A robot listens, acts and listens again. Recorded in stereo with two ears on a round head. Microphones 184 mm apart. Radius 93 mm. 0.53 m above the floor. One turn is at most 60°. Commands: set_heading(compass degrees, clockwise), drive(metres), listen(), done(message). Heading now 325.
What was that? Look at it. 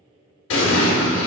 set_heading(265)
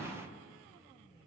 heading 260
listen()
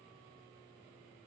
done("I heard an explosion, but can't make it out now. It was about 5° left or 45° left.")